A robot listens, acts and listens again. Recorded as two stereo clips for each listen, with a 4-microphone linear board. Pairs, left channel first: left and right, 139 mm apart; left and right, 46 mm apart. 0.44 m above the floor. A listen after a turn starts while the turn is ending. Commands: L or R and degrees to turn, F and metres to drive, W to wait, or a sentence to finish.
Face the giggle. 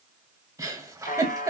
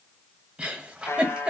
R25
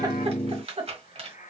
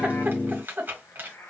R130
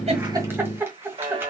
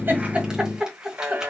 R20
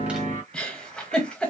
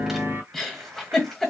Found it: a giggle, straight ahead, 1 to 2 m away.